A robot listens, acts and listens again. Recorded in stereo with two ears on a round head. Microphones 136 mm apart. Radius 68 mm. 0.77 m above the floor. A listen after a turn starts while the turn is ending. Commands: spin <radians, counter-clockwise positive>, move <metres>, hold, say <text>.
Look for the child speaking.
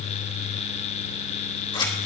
hold
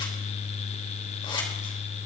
hold
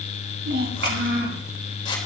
spin -1.31
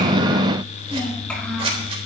hold
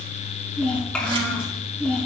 spin 0.17
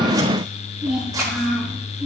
say Facing the child speaking.